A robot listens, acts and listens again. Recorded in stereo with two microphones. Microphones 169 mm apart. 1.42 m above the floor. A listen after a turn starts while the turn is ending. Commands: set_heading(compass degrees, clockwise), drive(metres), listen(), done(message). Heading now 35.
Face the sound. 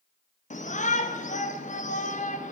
set_heading(350)
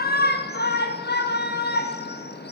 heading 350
set_heading(265)
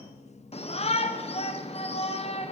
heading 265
set_heading(225)
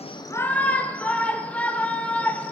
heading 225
set_heading(215)
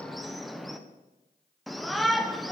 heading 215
done("Found it: a shout, straight ahead.")